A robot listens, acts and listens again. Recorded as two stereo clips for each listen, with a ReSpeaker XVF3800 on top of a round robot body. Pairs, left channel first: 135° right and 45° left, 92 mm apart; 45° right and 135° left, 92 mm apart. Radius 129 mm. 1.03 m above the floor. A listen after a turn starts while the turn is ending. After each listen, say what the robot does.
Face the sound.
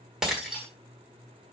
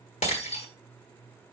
Turn 40° right.
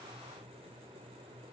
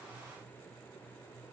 I heard breaking glass from this way, but can't make it out now.